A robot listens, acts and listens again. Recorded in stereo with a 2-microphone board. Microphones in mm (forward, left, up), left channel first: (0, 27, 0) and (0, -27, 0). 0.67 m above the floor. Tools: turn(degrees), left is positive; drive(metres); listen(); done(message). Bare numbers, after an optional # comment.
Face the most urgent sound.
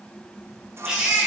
turn(-30)
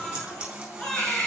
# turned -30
# So it is at 15° left.
turn(15)
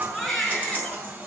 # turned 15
done("Found it: a baby crying, straight ahead.")